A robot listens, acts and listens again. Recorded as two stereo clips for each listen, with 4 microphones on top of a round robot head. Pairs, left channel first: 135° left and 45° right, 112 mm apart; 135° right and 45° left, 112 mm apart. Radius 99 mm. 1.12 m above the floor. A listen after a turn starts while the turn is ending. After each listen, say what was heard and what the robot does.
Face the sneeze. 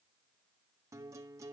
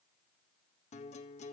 Keep listening.
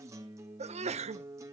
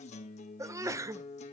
The sneeze: 20° right. Turn 20° right.
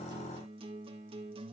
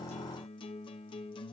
Facing where the sneeze came from. I can't hear it now.